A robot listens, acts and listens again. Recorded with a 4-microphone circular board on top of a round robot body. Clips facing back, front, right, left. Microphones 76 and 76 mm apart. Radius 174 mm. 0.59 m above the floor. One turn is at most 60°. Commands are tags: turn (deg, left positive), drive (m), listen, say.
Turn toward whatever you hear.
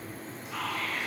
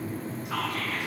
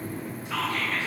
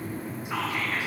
<turn deg="15"/>
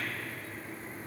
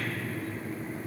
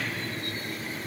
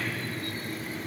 <listen/>
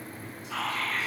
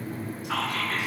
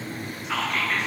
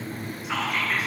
<say>Facing the whispering.</say>